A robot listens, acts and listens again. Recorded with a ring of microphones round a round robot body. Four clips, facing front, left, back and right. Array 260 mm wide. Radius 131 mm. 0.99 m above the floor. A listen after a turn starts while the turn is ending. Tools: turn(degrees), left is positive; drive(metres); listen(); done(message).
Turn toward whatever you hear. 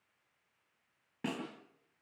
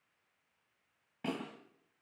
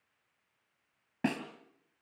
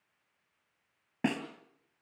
turn(degrees=-115)
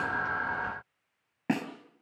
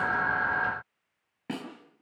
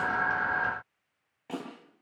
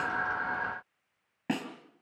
turn(degrees=-15)
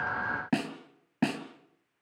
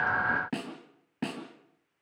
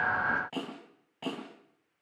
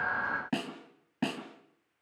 done("Found it: a snare drum, straight ahead.")